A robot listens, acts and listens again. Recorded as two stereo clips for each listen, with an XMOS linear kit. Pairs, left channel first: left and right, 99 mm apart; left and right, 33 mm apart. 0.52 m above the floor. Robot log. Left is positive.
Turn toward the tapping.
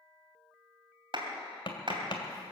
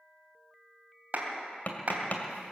note: The tapping: about 55° left or 125° left.
cmd yaw +55
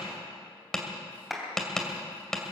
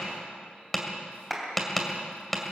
end: Facing the tapping.